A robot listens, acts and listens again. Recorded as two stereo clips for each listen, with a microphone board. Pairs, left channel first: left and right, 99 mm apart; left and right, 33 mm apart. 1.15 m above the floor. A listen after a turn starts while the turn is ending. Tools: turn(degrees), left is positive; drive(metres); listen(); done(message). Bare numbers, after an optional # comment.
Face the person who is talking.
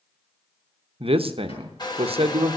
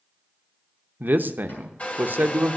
# The man speaking: about 70° right or 110° right.
turn(-70)
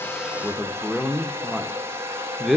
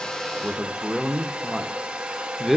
done("Found it: a man speaking, straight ahead.")